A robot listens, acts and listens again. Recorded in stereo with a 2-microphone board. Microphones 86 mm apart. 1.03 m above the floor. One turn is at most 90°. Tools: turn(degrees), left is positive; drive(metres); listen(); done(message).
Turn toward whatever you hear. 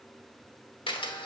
turn(degrees=90)
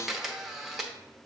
done("Facing the camera shutter.")